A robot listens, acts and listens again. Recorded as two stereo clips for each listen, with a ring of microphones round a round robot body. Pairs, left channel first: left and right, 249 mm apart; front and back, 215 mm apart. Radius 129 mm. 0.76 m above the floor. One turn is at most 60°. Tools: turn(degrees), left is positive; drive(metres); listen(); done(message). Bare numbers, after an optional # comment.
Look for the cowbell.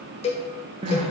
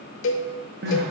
# The cowbell: 25° left.
turn(25)
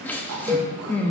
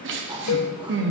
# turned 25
# The cowbell is now 15° right.
turn(-15)
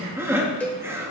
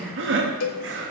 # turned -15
done("Found it: a cowbell, straight ahead, under 1 m away.")